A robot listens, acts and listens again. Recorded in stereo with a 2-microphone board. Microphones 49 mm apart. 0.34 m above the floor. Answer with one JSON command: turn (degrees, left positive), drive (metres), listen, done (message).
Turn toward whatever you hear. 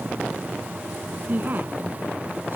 {"turn": -40}
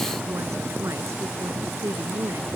{"turn": -105}
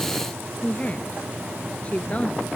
{"turn": 30}
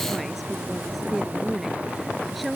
{"done": "Facing the woman speaking."}